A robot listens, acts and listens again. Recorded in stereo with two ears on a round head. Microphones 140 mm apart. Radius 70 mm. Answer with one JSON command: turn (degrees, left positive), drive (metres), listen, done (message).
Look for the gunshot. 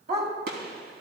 {"turn": -65}
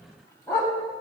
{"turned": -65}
{"listen": true}
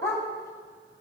{"done": "I heard a gunshot, but can't make it out now. It was about straight ahead or 50° right."}